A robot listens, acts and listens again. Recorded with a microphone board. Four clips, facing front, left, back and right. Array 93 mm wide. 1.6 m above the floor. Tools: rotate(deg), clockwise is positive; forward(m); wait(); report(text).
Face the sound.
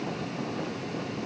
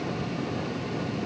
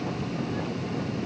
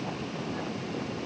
wait()
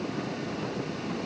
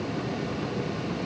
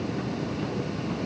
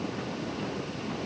wait()
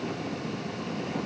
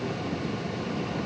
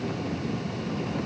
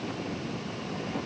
report("I can't make out anything.")